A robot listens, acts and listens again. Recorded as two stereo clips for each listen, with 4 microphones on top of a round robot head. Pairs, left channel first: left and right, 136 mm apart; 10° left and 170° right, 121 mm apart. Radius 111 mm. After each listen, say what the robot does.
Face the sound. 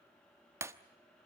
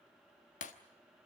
Turn 20° right.
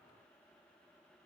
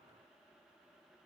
Facing where the breaking glass came from. I can't hear it now.